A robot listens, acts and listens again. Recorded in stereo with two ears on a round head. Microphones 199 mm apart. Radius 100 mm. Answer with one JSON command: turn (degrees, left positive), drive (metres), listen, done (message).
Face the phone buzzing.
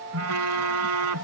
{"turn": -90}
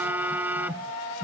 {"turn": -10}
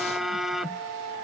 {"done": "Found it: a phone buzzing, straight ahead."}